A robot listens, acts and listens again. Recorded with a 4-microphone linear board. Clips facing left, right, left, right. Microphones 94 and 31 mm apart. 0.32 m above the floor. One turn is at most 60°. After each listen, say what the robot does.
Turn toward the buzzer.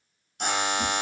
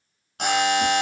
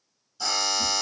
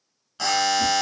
Turn 60° right.
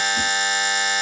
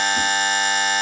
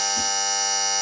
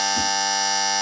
Turn 50° right.
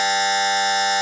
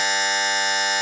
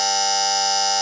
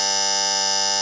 Facing the buzzer, 1 to 2 m away.